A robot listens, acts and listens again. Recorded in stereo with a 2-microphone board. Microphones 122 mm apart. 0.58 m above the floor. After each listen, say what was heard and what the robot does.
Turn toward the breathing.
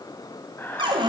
The breathing: about 20° left or 160° left. Turn 20° left.
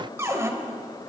Keep listening.
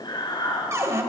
So it is at 145° left. Turn 145° left.
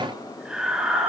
Found it: breathing, straight ahead, 2 to 4 m away.